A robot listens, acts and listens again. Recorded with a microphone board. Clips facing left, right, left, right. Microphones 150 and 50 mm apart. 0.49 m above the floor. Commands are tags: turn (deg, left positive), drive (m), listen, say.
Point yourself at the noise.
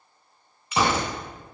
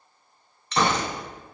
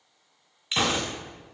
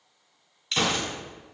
<turn deg="30"/>
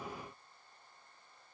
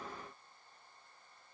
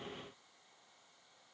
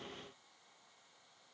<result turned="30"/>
<listen/>
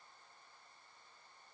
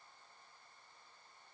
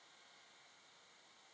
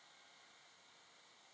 <say>I heard a gunshot, but can't make it out now. It was about 20° right or 140° left.</say>